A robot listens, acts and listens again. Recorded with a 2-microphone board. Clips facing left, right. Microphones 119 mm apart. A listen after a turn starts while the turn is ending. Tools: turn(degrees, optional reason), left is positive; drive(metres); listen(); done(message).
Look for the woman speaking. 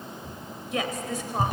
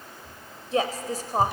turn(degrees=-40, reason="The woman speaking: about 40° right or 140° right.")
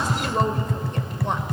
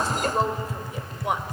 done("Facing the woman speaking, 2 to 4 m away.")